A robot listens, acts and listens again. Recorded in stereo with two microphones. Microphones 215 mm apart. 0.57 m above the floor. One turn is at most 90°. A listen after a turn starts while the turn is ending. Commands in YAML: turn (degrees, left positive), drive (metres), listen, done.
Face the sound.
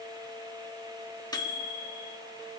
turn: 20
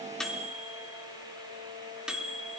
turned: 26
done: "Facing the microwave."